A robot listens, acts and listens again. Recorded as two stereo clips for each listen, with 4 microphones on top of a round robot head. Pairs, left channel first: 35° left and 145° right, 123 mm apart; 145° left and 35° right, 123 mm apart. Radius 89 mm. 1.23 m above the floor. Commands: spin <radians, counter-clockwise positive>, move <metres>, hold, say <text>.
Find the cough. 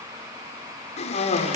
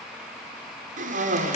say Found it: a cough, straight ahead.